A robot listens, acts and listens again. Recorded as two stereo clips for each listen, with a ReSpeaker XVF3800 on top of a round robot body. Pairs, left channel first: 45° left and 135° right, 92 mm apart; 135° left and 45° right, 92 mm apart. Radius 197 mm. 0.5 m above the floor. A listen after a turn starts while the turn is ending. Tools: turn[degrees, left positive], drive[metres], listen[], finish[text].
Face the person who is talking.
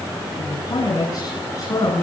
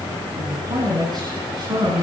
Action: finish[Facing the man speaking, over 4 m away.]